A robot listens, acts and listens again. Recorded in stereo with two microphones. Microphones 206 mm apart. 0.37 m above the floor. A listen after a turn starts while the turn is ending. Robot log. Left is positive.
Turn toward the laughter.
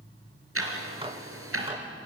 cmd idle
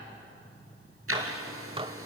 cmd idle
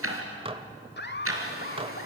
note: The laughter: about 50° left or 130° left.
cmd yaw +50
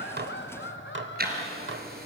note: So it is at 60° left.
cmd yaw +60
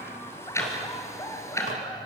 note: The laughter is now 15° left.
cmd yaw +15
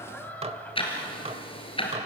end: Found it: laughter, straight ahead, 1 to 2 m away.